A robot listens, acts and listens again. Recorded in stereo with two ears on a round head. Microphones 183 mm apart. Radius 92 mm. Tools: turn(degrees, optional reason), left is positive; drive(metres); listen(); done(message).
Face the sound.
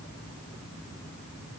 listen()
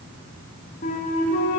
turn(degrees=40, reason="The flute: about 40° left or 140° left.")
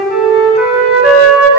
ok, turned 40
done("Found it: a flute, straight ahead.")